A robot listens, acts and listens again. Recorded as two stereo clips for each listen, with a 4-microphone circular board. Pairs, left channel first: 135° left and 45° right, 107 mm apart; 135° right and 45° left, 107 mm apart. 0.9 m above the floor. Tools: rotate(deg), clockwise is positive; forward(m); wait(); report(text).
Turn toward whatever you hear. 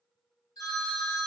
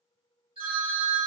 rotate(-85)
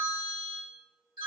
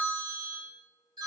report("Facing the phone ringing, 1 to 2 m away.")